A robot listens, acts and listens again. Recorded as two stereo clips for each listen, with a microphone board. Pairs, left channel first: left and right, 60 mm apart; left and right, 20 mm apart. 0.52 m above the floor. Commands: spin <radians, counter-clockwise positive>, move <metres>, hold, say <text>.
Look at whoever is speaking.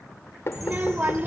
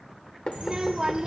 spin -0.52
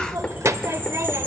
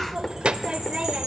spin -2.01
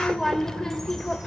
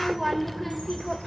spin 0.17
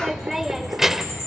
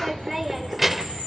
say Facing the child speaking.